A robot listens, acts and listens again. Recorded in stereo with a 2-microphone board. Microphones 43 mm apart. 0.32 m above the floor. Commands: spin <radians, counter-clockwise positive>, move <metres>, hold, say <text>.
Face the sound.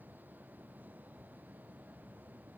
hold
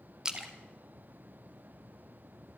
spin -0.26
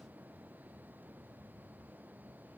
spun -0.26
hold
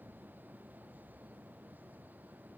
say I heard a splash, but can't make it out now. It was about straight ahead or 150° right.